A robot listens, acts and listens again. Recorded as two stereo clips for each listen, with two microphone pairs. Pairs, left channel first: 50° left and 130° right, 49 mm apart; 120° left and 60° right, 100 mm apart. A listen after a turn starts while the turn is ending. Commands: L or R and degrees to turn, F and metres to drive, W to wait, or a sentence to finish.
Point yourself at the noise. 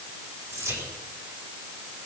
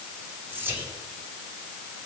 R125
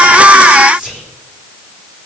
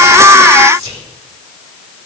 R55
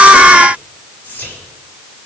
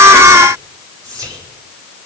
Facing the whispering.